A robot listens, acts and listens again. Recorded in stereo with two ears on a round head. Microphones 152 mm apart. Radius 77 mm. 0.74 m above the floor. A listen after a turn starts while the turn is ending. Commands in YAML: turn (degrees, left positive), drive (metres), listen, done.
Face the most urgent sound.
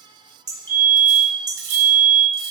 turn: 30
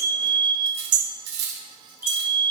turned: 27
turn: -15
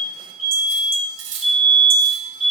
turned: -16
done: "Facing the fire alarm, 2 to 4 m away."